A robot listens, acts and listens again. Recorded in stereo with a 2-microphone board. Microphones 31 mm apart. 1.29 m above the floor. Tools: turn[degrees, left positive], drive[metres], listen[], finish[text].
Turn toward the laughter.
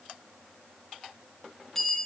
Action: listen[]
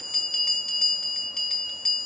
Action: listen[]
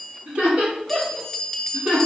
Thought: The laughter: about 40° right or 140° right.
Action: turn[-40]
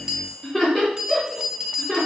Action: finish[Found it: laughter, straight ahead, 2 to 4 m away.]